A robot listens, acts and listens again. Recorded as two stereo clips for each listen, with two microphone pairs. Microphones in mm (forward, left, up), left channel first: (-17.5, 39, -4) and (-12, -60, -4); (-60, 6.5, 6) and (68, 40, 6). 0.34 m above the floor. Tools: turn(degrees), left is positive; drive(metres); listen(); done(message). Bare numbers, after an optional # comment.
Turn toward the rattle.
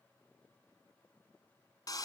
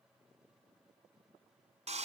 listen()
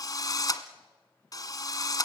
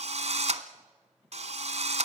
listen()
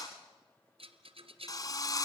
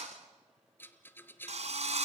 # The rattle: 90° right.
turn(-90)
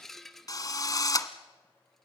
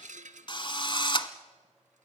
done("Found it: a rattle, straight ahead.")